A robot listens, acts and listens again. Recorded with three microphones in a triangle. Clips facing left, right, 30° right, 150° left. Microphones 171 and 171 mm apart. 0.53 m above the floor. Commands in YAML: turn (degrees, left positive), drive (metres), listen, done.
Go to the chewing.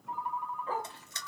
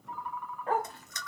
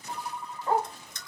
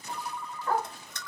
turn: 145
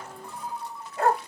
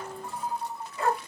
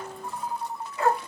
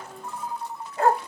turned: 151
listen: true
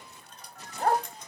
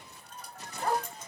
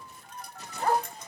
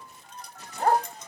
drive: 1.0
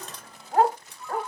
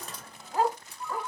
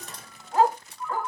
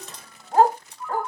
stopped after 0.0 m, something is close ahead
turn: -10
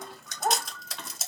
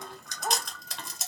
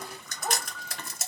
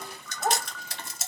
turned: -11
done: "Blocked. The chewing is further on, straight ahead."